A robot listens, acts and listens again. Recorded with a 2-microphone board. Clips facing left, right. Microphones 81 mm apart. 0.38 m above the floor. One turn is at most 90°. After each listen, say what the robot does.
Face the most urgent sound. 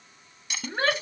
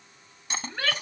Turn 35° left.
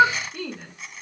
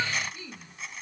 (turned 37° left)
Turn 90° left.
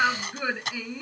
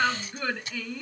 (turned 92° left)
Turn 10° left.
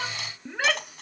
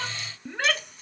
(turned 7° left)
Facing the shout.